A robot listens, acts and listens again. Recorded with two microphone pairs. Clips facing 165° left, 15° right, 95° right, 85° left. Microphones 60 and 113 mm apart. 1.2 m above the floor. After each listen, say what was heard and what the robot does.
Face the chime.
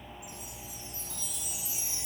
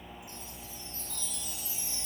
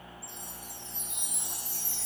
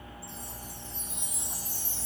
The chime: 120° right. Turn 120° right.
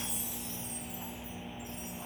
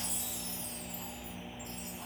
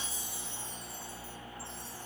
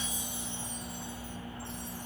Keep listening.
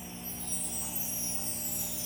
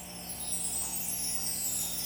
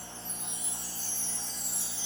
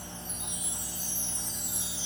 The chime is now 10° left. Turn 10° left.
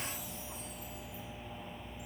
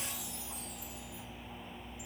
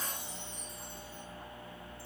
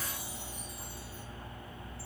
Keep listening.
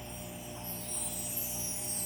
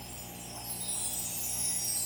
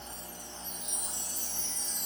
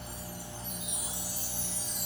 Facing the chime.